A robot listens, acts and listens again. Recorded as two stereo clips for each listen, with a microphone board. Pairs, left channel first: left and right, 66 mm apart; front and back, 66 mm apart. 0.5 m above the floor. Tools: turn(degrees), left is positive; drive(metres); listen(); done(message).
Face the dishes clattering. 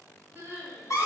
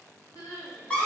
listen()
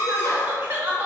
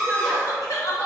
listen()
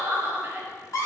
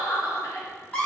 done("I can't make out dishes clattering to turn to.")